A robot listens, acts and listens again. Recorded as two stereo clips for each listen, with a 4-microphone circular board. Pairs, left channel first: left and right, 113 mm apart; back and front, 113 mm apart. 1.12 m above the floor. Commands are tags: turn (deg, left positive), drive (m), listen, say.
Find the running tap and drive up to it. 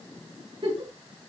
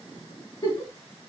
<listen/>
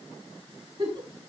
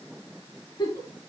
<listen/>
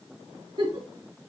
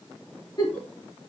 <say>I can't make out a running tap, only a giggle.</say>